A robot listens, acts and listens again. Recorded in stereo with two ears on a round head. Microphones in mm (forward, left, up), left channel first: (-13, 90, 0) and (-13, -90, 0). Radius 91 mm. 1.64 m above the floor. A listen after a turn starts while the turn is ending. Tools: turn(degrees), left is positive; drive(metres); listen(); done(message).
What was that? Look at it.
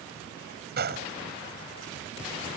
turn(degrees=-55)
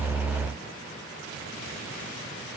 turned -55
listen()
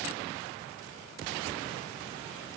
done("I heard a gunshot, but can't make it out now. It was about straight ahead or 70° right.")